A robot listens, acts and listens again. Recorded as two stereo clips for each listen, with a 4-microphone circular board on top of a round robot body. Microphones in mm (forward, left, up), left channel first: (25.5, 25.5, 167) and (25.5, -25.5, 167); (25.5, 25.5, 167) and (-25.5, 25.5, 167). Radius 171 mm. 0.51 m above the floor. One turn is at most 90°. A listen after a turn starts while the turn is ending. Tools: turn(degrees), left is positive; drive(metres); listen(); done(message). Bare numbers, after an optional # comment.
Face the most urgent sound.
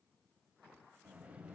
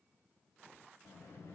listen()
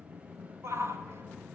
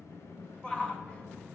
# The shout: 65° right.
turn(-65)
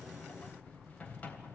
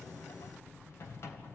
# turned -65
listen()
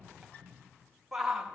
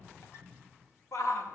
# The shout is now 10° right.
turn(-10)
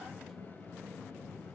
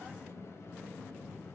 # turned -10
listen()
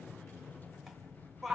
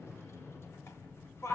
done("Found it: a shout, straight ahead.")